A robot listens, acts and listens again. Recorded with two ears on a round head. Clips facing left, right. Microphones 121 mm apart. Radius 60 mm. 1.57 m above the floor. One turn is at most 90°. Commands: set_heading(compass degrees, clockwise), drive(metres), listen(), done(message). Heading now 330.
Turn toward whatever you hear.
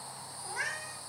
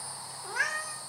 set_heading(60)
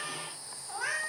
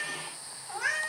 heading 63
done("Found it: a cat meowing, straight ahead.")